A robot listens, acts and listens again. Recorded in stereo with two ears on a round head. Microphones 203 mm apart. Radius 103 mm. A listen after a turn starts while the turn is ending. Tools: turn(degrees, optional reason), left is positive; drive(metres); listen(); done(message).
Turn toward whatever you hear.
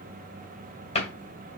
turn(degrees=30, reason="The cupboard door: about 30° left or 150° left.")
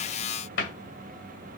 turn(degrees=120, reason="So it is at 120° left.")
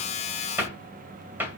turn(degrees=-10, reason="The cupboard door is now 10° right.")
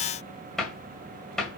done("Facing the cupboard door.")